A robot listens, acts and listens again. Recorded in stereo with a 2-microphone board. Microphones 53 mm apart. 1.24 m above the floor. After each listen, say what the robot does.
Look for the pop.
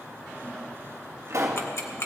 Turn 75° right.
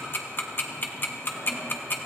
Keep listening.
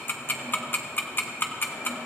I heard a pop, but can't make it out now. It was about straight ahead or 30° right.